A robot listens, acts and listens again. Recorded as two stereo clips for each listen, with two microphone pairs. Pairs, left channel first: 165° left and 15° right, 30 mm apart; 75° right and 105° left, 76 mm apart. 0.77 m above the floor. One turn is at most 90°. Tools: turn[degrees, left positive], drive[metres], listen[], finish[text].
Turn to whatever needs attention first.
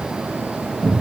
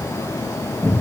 Action: listen[]
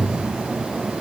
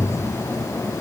Action: listen[]
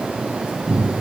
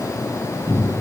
Action: finish[I can't make out anything urgent to turn to.]